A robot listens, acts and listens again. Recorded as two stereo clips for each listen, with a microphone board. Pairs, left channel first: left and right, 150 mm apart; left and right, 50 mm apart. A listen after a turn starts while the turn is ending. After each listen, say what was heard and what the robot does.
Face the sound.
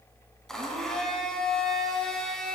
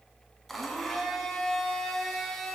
Turn 30° left.
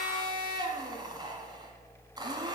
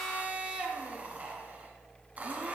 So it is at 30° right. Turn 30° right.
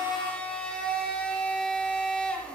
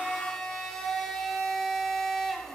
Found it: a blender, straight ahead.